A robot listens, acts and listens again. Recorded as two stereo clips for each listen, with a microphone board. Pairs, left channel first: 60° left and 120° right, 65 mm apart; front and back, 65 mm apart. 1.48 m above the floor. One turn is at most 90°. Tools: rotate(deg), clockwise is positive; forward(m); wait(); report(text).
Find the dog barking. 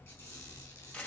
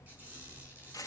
wait()
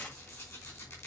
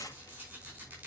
wait()
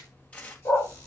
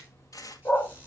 rotate(-50)
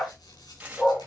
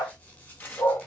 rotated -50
report("Found it: a dog barking, straight ahead.")